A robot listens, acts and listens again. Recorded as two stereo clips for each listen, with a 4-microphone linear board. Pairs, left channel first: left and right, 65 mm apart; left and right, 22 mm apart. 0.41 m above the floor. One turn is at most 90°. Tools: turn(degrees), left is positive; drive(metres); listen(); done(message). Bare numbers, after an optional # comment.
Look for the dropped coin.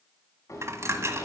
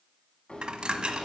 # The dropped coin: about 45° right or 135° right.
turn(-45)
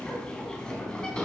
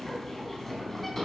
listen()
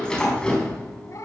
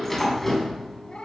done("I heard a dropped coin, but can't make it out now. It was about straight ahead or 90° right.")